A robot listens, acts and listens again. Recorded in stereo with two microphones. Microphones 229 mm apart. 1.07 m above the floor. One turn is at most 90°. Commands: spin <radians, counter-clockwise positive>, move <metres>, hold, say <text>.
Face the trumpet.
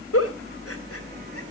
hold
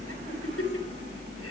hold
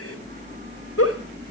say I can't make out a trumpet to turn to.